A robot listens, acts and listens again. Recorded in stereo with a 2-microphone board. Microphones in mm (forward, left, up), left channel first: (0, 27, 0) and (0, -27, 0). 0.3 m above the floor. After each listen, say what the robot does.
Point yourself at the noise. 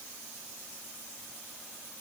Keep listening.
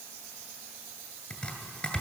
Turn 15° left.
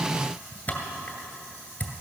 Turn 150° left.
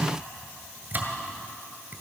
Turn 35° right.
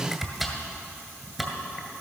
Facing the chopping, 2 to 4 m away.